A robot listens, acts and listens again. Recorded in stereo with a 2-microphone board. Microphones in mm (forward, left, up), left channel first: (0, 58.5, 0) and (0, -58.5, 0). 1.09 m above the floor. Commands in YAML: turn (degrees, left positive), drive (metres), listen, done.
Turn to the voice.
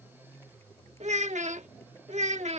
turn: -90
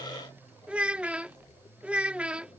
turn: -10
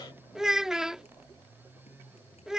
done: "Found it: a child speaking, straight ahead."